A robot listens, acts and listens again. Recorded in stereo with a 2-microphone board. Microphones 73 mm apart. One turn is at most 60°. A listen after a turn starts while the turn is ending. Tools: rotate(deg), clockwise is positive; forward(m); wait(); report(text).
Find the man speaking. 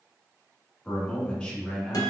rotate(-30)
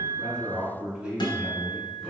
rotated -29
rotate(15)
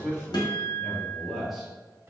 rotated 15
report("Facing the man speaking, 1 to 2 m away.")